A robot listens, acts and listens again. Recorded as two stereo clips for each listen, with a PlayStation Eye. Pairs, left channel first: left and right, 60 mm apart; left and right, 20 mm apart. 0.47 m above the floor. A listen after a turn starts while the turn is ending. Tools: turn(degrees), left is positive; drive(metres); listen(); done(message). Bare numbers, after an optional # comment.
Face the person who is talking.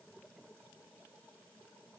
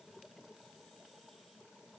listen()
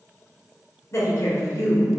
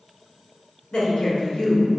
# The woman speaking: about 55° left or 125° left.
turn(55)
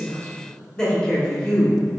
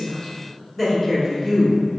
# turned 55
# So it is at 15° left.
turn(15)
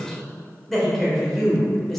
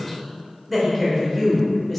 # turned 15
done("Found it: a woman speaking, straight ahead, 1 to 2 m away.")